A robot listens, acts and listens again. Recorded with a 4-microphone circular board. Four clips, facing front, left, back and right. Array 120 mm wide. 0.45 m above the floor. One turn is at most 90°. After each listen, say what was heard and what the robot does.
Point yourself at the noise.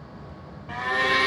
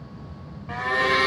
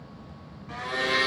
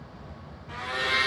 The blender: 70° left. Turn 70° left.
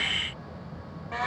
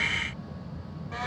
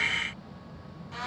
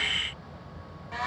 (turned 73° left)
Facing the blender.